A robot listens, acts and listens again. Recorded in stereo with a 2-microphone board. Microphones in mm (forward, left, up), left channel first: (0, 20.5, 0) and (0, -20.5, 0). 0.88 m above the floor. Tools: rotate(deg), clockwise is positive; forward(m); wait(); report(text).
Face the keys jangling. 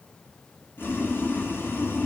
wait()
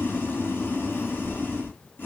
wait()
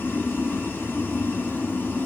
report("I can't make out keys jangling to turn to.")